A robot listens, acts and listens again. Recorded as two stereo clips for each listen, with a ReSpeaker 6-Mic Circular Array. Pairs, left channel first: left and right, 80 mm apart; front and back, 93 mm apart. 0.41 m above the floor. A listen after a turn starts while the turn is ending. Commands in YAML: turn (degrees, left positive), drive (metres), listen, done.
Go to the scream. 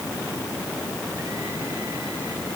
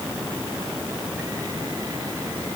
listen: true
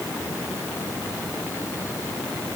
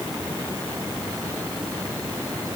listen: true
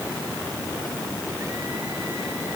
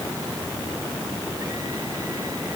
done: "I can't make out a scream to turn to."